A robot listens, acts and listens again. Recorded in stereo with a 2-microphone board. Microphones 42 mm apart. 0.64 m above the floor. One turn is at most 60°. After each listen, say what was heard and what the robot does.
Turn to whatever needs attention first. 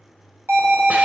The alarm: about 60° right or 120° right. Turn 60° right.
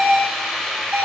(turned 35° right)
So it is at 75° right. Turn 60° right.
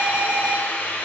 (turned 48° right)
The alarm is now 25° right. Turn 25° right.
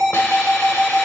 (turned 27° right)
Facing the alarm.